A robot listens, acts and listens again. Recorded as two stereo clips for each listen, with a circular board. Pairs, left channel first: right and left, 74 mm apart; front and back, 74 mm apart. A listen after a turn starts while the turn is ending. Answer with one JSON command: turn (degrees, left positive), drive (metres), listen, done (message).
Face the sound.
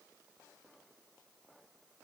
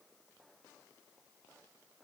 {"listen": true}
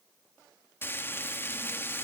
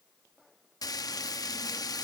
{"turn": -30}
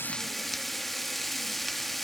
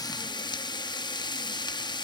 {"done": "Facing the frying."}